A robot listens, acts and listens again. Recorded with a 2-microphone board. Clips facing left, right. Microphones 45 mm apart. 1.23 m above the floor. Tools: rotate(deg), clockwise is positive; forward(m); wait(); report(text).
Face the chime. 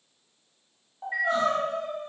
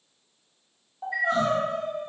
rotate(-55)
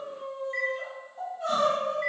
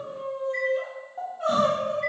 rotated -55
wait()
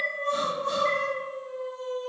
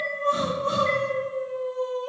wait()
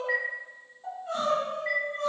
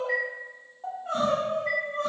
rotate(-55)
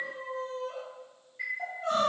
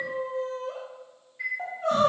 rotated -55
report("Found it: a chime, straight ahead, 1 to 2 m away.")